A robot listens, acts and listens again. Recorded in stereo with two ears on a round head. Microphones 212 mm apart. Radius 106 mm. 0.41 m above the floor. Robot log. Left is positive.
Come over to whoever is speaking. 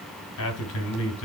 note: The man speaking: about 65° left or 115° left.
cmd yaw +65
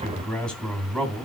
cmd fwd 1.0
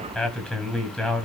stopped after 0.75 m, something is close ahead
end: Blocked. The man speaking is further on, straight ahead.